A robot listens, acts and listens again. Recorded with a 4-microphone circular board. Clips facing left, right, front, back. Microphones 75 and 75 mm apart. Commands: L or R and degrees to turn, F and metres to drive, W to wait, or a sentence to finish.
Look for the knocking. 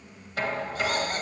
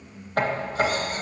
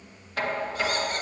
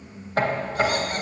R125
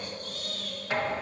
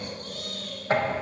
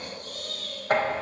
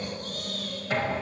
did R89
R35
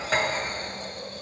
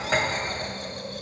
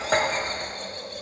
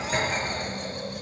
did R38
Facing the knocking.